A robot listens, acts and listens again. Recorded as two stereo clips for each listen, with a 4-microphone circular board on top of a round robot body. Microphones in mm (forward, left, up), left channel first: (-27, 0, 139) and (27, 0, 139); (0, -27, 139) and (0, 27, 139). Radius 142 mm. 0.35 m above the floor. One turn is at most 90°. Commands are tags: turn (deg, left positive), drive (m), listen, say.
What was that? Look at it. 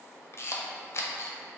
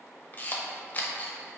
<turn deg="-90"/>
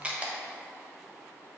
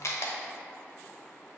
<turn deg="-70"/>
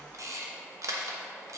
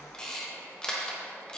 <turn deg="-15"/>
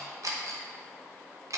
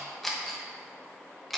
<say>Found it: a camera shutter, straight ahead.</say>